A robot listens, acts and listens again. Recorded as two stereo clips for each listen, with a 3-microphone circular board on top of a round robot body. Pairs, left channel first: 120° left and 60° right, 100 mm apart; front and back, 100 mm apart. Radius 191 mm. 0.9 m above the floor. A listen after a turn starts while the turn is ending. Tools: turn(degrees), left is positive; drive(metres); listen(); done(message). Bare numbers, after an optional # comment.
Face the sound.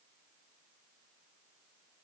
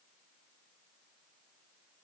listen()
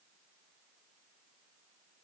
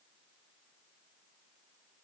listen()
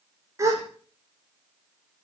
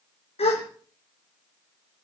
done("Found it: a gasp, straight ahead, over 4 m away.")